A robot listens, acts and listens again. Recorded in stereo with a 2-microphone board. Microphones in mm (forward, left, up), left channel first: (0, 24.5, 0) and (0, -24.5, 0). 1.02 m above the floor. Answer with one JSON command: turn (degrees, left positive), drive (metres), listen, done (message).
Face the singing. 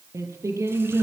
{"turn": -90}
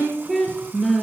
{"done": "Facing the singing."}